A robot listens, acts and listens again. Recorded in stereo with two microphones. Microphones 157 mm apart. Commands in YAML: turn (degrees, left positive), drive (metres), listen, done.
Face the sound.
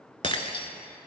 turn: 35
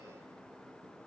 listen: true
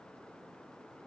done: "I heard breaking glass, but can't make it out now. It was about straight ahead or 110° left."